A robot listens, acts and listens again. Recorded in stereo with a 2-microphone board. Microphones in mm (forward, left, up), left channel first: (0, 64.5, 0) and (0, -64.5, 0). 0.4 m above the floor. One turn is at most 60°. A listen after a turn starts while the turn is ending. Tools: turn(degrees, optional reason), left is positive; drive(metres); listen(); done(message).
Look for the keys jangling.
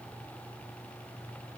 listen()
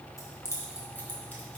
turn(degrees=20, reason="The keys jangling: about 20° left or 160° left.")
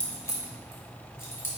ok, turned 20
turn(degrees=15, reason="The keys jangling: about 15° left or 165° left.")
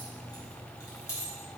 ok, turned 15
turn(degrees=20, reason="The keys jangling: about 20° left or 160° left.")
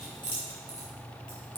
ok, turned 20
turn(degrees=35, reason="The keys jangling: about 35° left or 145° left.")
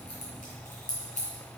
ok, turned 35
turn(degrees=60, reason="So it is at 110° left.")
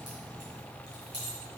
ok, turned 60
turn(degrees=35, reason="The keys jangling is now 35° left.")
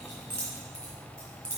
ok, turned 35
turn(degrees=10, reason="The keys jangling is now 10° left.")
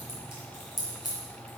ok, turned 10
done("Found it: keys jangling, straight ahead, 2 to 4 m away.")